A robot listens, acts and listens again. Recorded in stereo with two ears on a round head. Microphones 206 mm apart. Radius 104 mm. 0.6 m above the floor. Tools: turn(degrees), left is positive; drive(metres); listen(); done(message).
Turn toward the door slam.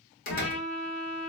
turn(degrees=40)
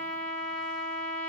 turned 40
listen()
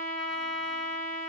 done("I heard a door slam, but can't make it out now. It was about straight ahead or 100° left.")